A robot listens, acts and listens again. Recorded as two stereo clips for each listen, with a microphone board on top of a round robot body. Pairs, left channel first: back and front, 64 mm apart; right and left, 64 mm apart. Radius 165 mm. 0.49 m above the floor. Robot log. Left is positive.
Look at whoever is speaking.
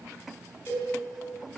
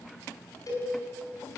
cmd idle
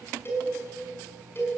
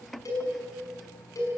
cmd idle
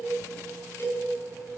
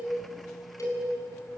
end: I can't make out anyone speaking, only a cowbell.